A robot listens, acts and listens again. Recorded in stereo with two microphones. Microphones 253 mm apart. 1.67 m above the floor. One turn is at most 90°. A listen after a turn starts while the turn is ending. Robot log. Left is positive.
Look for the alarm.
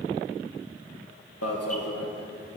cmd yaw +90
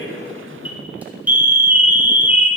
end: Found it: an alarm, straight ahead, 1 to 2 m away.